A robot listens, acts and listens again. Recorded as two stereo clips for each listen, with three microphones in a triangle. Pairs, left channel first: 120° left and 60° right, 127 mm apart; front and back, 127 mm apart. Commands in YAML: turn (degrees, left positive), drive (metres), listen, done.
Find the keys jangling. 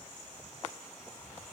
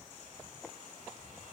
listen: true
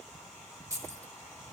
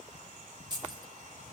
turn: -125
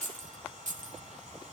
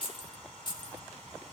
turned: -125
turn: -55
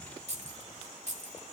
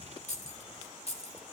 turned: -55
turn: -35
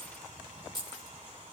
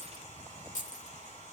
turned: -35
done: "Found it: keys jangling, straight ahead."